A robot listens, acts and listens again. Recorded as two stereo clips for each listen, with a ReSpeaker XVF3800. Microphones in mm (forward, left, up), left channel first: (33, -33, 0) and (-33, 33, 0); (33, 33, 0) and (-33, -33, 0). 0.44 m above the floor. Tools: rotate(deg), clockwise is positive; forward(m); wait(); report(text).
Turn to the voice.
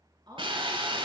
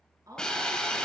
rotate(-175)
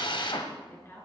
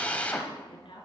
rotate(-20)
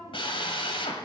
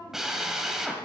report("Found it: a woman speaking, straight ahead.")